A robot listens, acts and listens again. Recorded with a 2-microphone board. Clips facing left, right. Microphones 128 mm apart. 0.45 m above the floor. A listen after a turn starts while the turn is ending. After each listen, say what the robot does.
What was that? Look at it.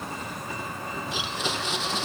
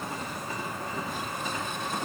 Turn 90° left.
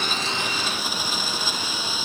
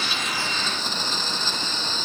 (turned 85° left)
Turn 10° left.
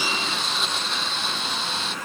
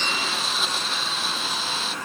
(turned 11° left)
Facing the blender.